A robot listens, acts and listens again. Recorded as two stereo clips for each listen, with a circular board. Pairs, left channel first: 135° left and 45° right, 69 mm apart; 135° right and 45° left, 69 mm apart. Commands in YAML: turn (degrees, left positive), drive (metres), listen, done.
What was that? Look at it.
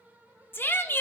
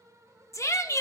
turn: -170
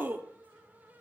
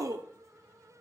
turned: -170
turn: 15
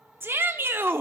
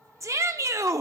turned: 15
turn: 10
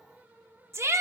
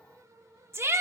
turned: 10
done: "Facing the shout, under 1 m away."